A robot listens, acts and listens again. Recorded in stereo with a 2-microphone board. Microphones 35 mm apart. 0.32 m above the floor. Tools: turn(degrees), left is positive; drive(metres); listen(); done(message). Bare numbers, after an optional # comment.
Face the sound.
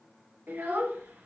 # The child speaking: about 70° right or 110° right.
turn(-70)
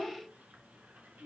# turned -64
# So it is at 50° right.
turn(-50)
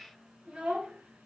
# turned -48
# The child speaking is now 30° right.
turn(-30)
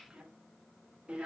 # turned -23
# The child speaking is now 35° right.
turn(-35)
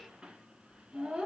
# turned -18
# The child speaking is now 20° right.
turn(-20)
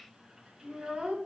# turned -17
done("Found it: a child speaking, straight ahead.")